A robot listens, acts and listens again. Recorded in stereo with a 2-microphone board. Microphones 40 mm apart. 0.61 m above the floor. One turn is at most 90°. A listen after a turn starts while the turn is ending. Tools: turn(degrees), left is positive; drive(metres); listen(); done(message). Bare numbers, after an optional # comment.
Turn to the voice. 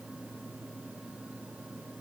listen()
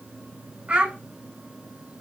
# The child speaking: about 35° right or 145° right.
turn(-35)
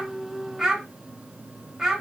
done("Facing the child speaking, 1 to 2 m away.")